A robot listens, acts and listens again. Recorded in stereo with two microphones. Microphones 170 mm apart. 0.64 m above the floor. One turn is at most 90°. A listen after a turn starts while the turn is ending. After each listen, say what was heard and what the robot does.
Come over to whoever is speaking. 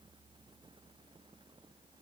Keep listening.
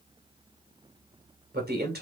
The man speaking: about 65° right or 115° right. Turn 65° right.
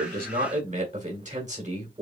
So it is at 45° right. Turn 45° right.
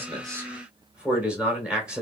Drive 1.0 m forward.
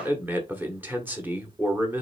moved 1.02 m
The man speaking is now 10° right. Turn 10° right.
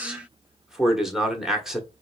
Drive 1.0 m forward.
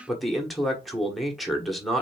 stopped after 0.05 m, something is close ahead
Arrived at the man speaking, straight ahead.